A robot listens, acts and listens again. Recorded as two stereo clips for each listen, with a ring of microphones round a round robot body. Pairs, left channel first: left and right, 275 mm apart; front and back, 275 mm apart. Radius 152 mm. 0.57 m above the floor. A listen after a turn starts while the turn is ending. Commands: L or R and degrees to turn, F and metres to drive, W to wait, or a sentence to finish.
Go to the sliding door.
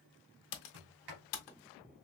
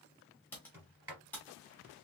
R100
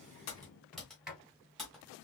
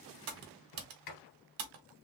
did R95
F1.0
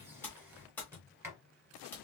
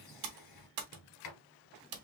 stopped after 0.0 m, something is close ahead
R10
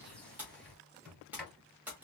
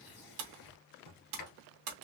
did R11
Blocked. The sliding door is further on, straight ahead.